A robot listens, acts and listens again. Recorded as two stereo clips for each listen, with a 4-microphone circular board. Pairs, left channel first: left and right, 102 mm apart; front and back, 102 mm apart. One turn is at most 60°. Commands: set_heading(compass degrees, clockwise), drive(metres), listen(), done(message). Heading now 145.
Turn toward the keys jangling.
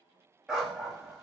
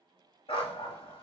listen()
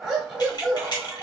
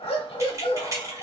set_heading(85)
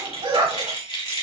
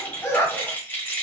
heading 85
set_heading(25)
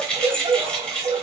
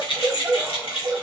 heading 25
set_heading(15)
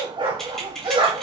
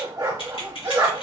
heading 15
done("Found it: keys jangling, straight ahead, under 1 m away.")